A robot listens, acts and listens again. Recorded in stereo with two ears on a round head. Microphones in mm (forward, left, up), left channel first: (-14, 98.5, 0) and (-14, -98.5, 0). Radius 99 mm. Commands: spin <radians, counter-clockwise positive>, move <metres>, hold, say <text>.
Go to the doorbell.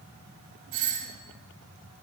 spin -0.87
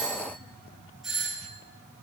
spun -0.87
move 1.0
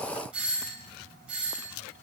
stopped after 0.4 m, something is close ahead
say Something is in my way. I am facing the doorbell but have not reached it.